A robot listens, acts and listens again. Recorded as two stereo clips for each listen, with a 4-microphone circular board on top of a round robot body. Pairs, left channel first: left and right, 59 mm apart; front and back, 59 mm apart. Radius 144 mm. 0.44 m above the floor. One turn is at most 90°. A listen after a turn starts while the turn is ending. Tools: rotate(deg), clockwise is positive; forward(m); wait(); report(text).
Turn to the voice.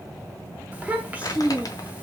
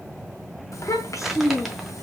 rotate(25)
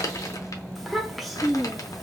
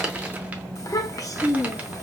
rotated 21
report("Found it: a child speaking, straight ahead, 1 to 2 m away.")